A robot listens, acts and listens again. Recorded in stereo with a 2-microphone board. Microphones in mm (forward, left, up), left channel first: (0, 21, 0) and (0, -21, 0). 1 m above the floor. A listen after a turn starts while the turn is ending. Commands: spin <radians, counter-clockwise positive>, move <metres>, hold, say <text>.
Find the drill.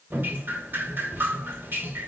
hold
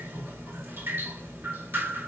hold
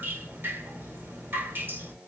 spin -0.35
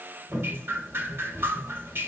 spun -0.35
hold
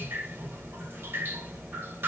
hold
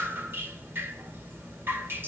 say I heard a drill, but can't make it out now. It was about straight ahead or 140° right.